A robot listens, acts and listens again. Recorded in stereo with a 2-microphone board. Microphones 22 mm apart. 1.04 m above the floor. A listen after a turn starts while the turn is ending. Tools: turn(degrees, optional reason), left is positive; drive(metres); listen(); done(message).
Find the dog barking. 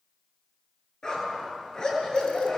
turn(degrees=35, reason="The dog barking: about 35° left or 145° left.")
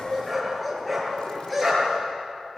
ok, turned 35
done("Facing the dog barking, over 4 m away.")